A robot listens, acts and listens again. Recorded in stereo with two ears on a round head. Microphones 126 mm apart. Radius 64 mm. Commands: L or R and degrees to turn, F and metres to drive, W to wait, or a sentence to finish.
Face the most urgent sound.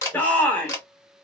L30
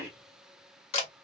W
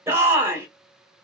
R15
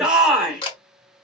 Found it: a shout, straight ahead.